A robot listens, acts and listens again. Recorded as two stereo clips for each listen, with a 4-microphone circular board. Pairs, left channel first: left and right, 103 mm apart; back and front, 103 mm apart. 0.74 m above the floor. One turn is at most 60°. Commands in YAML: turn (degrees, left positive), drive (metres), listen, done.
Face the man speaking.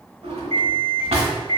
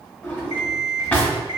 listen: true
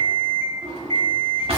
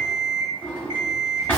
listen: true
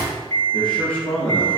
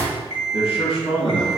turn: 60
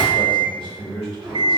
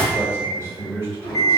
turn: 60
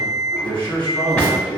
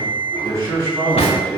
turn: 50
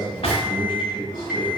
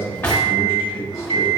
turn: -15
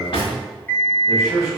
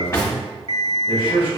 done: "Facing the man speaking, 2 to 4 m away."